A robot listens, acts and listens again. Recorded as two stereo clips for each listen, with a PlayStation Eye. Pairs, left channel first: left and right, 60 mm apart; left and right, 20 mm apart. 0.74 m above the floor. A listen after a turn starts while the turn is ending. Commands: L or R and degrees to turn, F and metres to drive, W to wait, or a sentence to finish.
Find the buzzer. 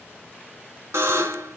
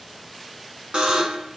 R50
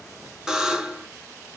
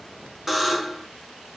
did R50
R15
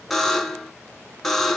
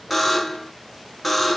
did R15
Facing the buzzer.